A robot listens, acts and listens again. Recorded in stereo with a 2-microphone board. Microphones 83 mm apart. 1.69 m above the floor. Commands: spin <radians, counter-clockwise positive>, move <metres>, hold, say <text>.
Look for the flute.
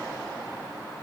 hold
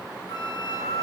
spin 0.96
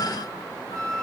spin 1.22
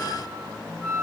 spin 0.17
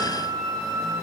say Found it: a flute, straight ahead.